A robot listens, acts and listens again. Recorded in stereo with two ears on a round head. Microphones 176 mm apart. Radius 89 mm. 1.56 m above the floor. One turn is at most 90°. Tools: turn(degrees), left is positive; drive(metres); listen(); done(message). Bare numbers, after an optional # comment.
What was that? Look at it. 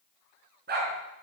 # The dog barking: about 50° right or 130° right.
turn(-50)
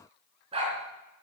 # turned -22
# So it is at 30° right.
turn(-30)
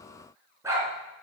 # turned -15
# The dog barking is now 15° right.
turn(-15)
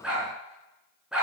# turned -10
done("Found it: a dog barking, straight ahead, over 4 m away.")